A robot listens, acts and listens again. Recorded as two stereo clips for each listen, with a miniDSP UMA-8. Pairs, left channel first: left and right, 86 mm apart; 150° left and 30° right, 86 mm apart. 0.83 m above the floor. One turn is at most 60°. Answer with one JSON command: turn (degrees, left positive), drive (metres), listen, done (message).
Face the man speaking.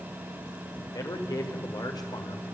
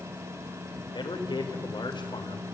{"turn": 60}
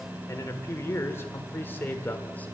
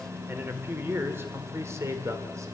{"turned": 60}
{"turn": 20}
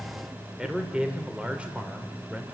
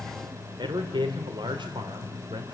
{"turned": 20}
{"turn": -15}
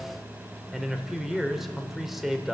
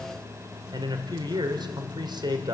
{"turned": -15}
{"done": "Found it: a man speaking, straight ahead, 2 to 4 m away."}